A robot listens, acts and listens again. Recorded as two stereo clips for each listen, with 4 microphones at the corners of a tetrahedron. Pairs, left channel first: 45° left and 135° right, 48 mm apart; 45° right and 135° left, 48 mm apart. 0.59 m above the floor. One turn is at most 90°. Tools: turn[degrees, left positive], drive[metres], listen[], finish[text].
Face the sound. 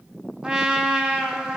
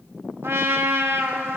Thought: The trumpet: 155° left.
Action: turn[90]
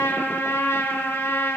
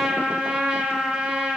Thought: The trumpet is now 65° left.
Action: turn[65]
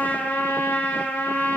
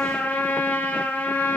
Action: finish[Facing the trumpet.]